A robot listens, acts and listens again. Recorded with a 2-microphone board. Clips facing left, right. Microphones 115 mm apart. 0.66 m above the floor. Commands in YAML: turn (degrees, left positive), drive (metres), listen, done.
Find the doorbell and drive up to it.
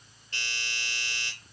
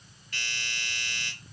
turn: 30
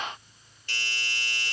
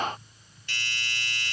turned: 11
turn: 35
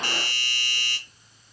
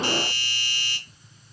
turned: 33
turn: 105
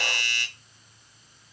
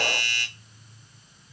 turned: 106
drive: 1.0
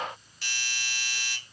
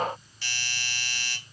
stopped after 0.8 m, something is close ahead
done: "I am next to the doorbell."